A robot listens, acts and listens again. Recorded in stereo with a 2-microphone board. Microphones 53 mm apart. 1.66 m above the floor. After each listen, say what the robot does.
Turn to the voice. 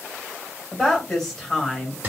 Turn 30° left.
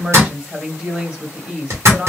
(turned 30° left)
Turn 25° right.
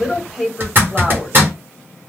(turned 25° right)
Facing the woman speaking.